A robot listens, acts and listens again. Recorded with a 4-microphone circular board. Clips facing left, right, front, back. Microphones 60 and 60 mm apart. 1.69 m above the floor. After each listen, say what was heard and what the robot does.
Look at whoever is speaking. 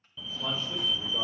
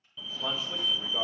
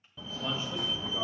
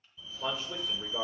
The man speaking: straight behind. Turn 180° left.
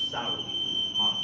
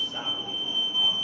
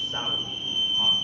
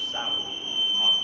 The man speaking is now 60° left. Turn 60° left.
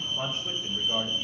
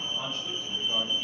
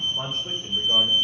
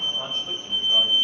The man speaking is now 20° left. Turn 20° left.
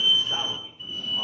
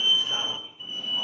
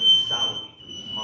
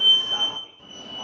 Facing the man speaking.